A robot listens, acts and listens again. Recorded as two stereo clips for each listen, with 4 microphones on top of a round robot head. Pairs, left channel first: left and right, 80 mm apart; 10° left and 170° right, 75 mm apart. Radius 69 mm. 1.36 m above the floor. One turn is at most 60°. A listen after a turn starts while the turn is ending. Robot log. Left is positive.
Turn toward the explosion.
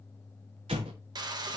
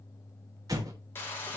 note: The explosion: 115° right.
cmd yaw -60
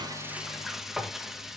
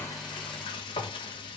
note: Nothing new. It was at 55° right.
cmd yaw -55
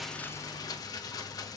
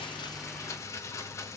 end: I heard an explosion from this way, but can't make it out now.